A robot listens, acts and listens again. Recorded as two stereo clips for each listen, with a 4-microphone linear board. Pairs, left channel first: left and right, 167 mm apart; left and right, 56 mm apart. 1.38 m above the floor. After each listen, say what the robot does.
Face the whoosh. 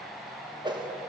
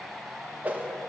Turn 25° right.
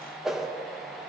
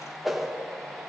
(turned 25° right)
Facing the whoosh.